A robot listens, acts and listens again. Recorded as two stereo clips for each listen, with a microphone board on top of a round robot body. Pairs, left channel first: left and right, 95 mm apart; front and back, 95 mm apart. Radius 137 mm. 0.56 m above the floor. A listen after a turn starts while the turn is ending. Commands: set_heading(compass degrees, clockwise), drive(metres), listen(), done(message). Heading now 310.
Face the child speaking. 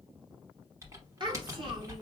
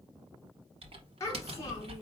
set_heading(5)
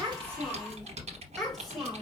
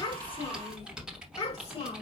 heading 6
done("Found it: a child speaking, straight ahead, 2 to 4 m away.")